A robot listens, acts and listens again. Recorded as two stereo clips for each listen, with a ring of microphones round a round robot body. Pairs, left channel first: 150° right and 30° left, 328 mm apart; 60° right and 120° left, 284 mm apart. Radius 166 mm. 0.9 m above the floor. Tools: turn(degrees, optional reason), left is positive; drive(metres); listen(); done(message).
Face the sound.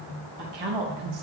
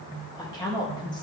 turn(degrees=15, reason="The woman speaking: 15° left.")
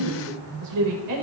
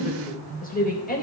done("Found it: a woman speaking, straight ahead, 2 to 4 m away.")